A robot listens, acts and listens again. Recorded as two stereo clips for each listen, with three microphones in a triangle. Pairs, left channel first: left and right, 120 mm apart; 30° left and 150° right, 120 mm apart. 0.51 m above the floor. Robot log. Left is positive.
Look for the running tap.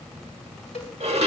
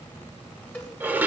cmd idle
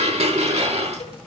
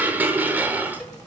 cmd idle
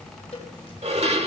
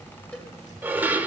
end: I can't make out a running tap, only a cowbell and dishes clattering.